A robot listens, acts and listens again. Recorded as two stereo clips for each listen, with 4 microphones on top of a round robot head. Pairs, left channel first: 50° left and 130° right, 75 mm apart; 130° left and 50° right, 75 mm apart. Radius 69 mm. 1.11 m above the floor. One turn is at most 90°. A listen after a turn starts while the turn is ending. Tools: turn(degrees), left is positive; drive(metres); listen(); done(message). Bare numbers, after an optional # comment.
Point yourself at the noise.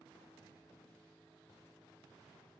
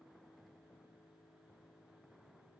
listen()
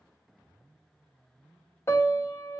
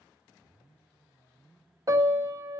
done("Found it: a piano, straight ahead.")